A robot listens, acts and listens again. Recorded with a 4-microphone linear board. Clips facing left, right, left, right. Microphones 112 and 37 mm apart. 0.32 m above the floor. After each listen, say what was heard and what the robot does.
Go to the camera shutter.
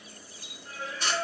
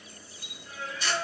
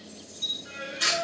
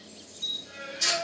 The camera shutter: about 65° left or 115° left. Turn 65° left.
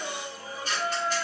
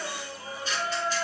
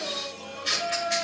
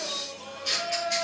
So it is at 45° left. Turn 45° left.
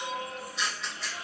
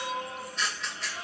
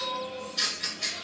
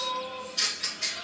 Drive 1.0 m forward.
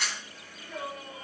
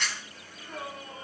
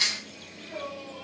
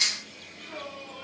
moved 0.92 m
Drive 1.0 m forward.
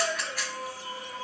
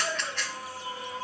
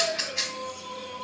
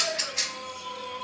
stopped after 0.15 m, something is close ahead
Arrived at the camera shutter, straight ahead.